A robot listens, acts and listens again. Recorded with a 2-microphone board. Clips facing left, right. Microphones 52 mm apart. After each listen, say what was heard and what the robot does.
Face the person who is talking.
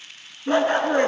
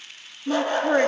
The woman speaking: about 20° right or 160° right. Turn 20° right.
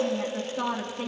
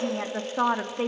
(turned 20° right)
So it is at 140° right. Turn 140° right.
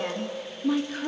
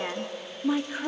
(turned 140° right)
The woman speaking is now 15° right. Turn 15° right.
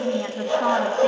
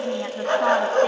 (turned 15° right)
Found it: a woman speaking, straight ahead, 1 to 2 m away.